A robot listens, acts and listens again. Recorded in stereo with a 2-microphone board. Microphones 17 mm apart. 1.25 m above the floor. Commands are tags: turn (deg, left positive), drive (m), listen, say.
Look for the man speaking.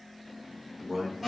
<turn deg="-35"/>
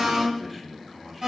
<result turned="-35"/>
<turn deg="-15"/>
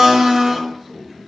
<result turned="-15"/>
<turn deg="-15"/>
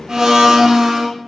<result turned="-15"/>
<listen/>
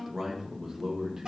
<turn deg="-40"/>
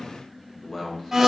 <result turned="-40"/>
<turn deg="35"/>
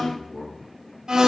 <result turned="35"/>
<turn deg="-10"/>
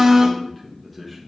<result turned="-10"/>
<say>Found it: a man speaking, straight ahead.</say>